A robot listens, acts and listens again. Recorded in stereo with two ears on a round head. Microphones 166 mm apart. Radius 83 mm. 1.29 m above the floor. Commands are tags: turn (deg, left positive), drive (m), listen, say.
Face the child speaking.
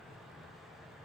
<listen/>
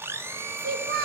<turn deg="-55"/>
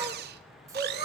<turn deg="-20"/>
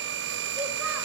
<listen/>
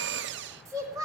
<turn deg="-20"/>
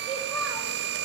<listen/>
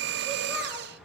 <listen/>
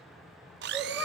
<say>Facing the child speaking, 2 to 4 m away.</say>